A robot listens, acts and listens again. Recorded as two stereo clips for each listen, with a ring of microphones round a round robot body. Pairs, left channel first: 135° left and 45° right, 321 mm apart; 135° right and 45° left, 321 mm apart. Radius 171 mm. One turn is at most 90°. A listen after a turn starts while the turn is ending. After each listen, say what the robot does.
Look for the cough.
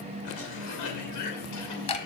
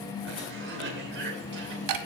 Turn 90° left.
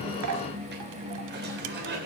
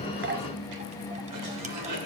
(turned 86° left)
Turn 15° left.
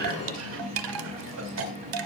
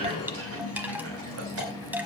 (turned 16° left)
Facing the cough.